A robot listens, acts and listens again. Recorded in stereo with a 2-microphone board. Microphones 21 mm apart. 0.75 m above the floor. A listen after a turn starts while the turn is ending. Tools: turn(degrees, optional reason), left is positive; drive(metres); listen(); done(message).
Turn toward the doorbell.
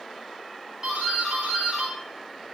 turn(degrees=-50, reason="The doorbell: about 50° right or 130° right.")
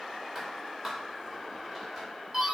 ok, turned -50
turn(degrees=-10, reason="So it is at 10° right.")
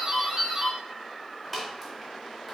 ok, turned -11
done("Facing the doorbell, 1 to 2 m away.")